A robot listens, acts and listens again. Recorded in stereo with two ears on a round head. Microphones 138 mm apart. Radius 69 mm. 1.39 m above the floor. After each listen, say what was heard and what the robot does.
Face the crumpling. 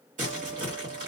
The crumpling: about 55° right or 125° right. Turn 55° right.
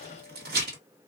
So it is at 70° right. Turn 70° right.
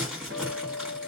Found it: crumpling, straight ahead.